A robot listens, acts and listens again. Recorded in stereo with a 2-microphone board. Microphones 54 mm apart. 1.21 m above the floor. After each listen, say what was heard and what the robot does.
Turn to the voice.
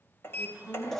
The woman speaking: about 30° right or 150° right. Turn 30° right.
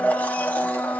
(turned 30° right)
Keep listening.
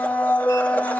Keep listening.
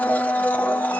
I heard a woman speaking, but can't make it out now. It was about straight ahead or 120° right.